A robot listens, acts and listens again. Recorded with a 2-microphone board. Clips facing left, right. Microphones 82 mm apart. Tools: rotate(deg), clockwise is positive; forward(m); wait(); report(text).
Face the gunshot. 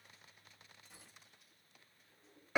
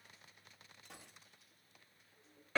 rotate(90)
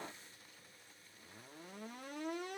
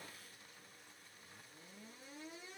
report("I heard a gunshot from this way, but can't make it out now.")